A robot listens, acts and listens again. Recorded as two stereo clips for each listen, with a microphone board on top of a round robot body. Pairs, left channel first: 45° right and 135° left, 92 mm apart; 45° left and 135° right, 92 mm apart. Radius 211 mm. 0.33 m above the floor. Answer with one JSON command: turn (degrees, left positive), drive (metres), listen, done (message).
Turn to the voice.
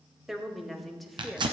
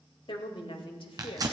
{"turn": 40}
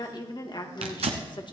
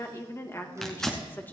{"turn": -20}
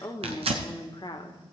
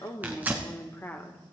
{"turn": -20}
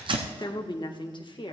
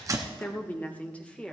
{"turn": -30}
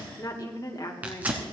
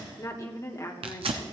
{"done": "Found it: a woman speaking, straight ahead, 1 to 2 m away."}